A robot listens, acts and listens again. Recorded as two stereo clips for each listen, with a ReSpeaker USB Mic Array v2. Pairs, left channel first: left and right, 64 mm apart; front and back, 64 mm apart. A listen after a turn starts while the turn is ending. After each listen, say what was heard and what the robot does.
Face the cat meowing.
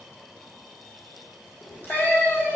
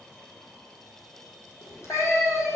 The cat meowing: 25° left. Turn 25° left.
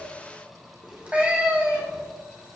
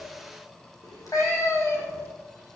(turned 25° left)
The cat meowing is now 30° right. Turn 30° right.
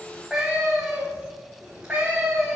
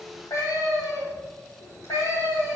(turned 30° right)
The cat meowing is now 20° right. Turn 20° right.
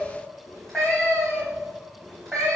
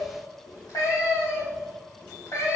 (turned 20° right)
Facing the cat meowing.